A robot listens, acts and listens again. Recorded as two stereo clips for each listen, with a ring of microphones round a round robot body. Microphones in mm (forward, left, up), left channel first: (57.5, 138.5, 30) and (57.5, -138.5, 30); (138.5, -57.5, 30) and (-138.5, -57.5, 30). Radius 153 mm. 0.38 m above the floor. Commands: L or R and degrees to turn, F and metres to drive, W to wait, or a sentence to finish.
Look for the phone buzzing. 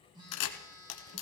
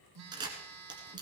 R165
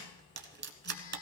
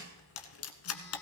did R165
W
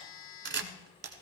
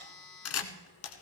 L55
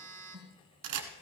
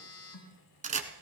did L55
R25
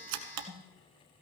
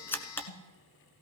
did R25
L10
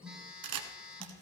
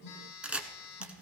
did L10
Facing the phone buzzing.